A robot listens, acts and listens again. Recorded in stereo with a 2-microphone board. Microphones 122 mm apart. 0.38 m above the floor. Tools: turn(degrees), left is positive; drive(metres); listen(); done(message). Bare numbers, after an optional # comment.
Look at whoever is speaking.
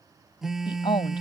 # The woman speaking: about 45° left or 135° left.
turn(45)
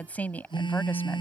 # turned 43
# So it is at 15° left.
turn(15)
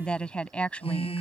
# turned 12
# The woman speaking is now 10° left.
turn(10)
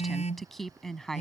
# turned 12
done("Facing the woman speaking.")